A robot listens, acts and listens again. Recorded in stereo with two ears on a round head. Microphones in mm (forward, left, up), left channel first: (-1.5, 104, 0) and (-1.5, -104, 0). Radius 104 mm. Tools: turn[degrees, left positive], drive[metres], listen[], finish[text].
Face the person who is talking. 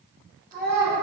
Thought: The child speaking: about 40° right or 140° right.
Action: turn[-40]
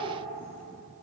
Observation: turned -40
Action: listen[]
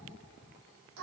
Thought: So it is at 100° right.
Action: turn[-100]
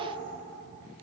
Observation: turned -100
Action: listen[]
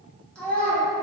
Action: finish[Facing the child speaking.]